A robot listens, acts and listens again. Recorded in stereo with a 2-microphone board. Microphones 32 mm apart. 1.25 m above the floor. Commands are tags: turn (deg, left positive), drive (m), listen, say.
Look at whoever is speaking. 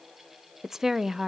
<turn deg="-30"/>
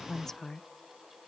<turn deg="15"/>
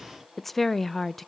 <say>Found it: a woman speaking, straight ahead.</say>